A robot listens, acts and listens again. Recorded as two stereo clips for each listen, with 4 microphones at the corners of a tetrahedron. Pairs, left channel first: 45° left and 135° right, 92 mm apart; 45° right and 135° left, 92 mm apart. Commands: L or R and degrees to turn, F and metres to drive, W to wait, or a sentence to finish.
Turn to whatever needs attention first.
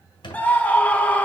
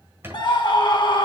R30
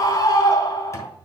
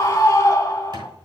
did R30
Found it: a scream, straight ahead.